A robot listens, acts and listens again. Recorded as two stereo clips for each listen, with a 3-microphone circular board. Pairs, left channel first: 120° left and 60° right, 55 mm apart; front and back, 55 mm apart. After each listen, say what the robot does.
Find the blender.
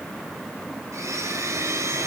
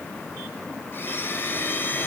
Turn 45° right.
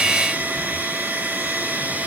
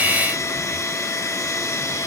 Found it: a blender, straight ahead, 2 to 4 m away.